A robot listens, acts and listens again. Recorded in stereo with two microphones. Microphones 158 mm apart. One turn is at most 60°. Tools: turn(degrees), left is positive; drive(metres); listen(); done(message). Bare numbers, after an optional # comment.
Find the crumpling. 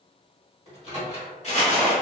# The crumpling: about 45° left or 135° left.
turn(45)
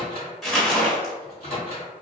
done("Found it: crumpling, straight ahead, under 1 m away.")